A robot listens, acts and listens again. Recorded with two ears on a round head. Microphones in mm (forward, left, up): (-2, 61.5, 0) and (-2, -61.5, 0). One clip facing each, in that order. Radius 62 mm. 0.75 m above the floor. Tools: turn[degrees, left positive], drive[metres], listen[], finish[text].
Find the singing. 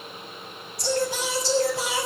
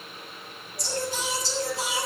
Thought: The singing: about 60° left or 120° left.
Action: turn[60]
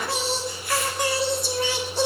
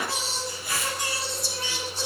Thought: So it is at 55° left.
Action: turn[55]
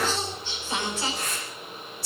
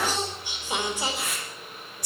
Thought: The singing is now 15° right.
Action: turn[-15]
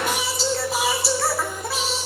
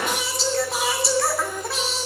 Action: finish[Facing the singing.]